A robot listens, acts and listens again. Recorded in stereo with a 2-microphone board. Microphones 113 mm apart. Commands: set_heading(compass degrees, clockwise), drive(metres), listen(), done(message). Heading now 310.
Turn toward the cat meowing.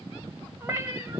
set_heading(335)
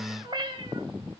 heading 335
set_heading(105)
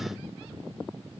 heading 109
listen()
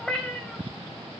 done("Facing the cat meowing, 2 to 4 m away.")